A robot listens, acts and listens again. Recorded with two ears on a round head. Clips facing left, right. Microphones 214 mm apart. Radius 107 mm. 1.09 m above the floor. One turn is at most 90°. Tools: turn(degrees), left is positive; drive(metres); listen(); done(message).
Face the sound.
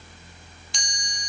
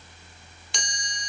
turn(degrees=-50)
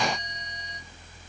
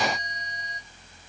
listen()
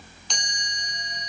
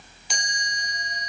done("Found it: a chime, straight ahead.")